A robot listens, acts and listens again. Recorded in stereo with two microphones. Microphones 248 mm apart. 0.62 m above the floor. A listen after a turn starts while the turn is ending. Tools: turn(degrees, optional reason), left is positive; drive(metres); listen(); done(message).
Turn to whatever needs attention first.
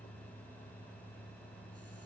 listen()
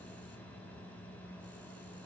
listen()
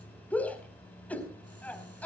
turn(degrees=30)
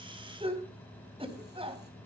turn(degrees=-25, reason="So it is at 25° right.")
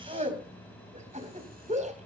turn(degrees=-30, reason="The shout is now 30° right.")
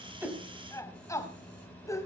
turn(degrees=15, reason="The shout is now 15° left.")
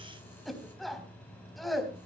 done("Facing the shout, 2 to 4 m away.")